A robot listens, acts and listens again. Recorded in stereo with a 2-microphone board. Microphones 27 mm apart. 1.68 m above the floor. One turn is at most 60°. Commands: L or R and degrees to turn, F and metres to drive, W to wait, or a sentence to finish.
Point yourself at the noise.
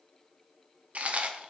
R55
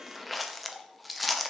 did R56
Facing the chewing.